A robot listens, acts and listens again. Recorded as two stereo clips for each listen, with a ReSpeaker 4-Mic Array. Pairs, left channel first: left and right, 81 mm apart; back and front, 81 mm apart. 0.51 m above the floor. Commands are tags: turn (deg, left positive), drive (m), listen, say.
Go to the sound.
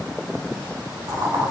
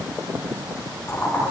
<turn deg="-125"/>
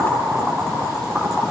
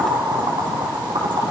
<drive m="1.0"/>
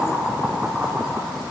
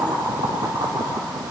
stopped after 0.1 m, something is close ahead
<say>Something is in my way. I am facing the boiling but have not reached it.</say>